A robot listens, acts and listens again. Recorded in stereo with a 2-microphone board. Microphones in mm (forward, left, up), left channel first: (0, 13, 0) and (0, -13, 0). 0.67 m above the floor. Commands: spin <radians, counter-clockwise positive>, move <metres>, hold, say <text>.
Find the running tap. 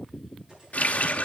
spin 1.31
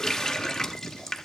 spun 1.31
spin 0.35
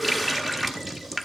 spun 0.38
say Facing the running tap, 1 to 2 m away.